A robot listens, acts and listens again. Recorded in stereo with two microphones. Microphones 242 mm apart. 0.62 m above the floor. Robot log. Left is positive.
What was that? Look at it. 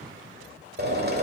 note: The drill: about 40° right or 140° right.
cmd yaw -40
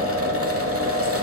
note: So it is at 90° right.
cmd yaw -90
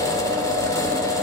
note: The drill is now 15° left.
cmd yaw +15
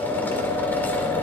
note: The drill is now 10° left.
cmd yaw +10
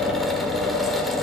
end: Facing the drill.